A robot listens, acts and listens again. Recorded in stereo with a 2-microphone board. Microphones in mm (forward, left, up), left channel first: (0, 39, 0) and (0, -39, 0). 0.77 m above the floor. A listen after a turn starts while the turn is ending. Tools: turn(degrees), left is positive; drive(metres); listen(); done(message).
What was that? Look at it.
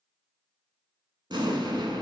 turn(degrees=-70)
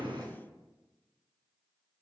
listen()
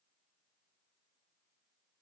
done("I heard an explosion, but can't make it out now. It was about straight ahead or 40° right.")